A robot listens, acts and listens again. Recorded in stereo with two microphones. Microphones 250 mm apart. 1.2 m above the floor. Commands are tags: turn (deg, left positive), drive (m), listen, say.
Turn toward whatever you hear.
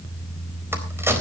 <turn deg="-30"/>
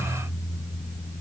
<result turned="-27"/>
<listen/>
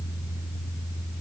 <say>I heard a crack, but can't make it out now. It was about 15° left or 145° right.</say>